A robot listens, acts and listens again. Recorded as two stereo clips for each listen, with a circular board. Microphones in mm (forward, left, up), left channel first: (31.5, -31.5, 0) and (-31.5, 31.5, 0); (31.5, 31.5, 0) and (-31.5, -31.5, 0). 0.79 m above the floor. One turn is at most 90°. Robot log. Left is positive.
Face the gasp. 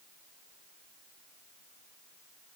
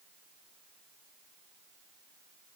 cmd idle
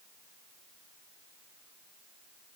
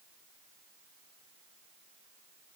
cmd idle
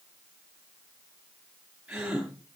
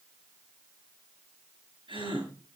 note: The gasp: 145° right.
cmd yaw -90
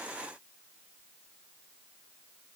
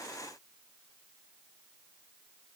note: Nothing new. It was at 55° right.
cmd yaw -55
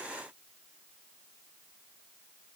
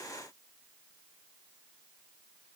end: Facing where the gasp came from. I can't hear it now.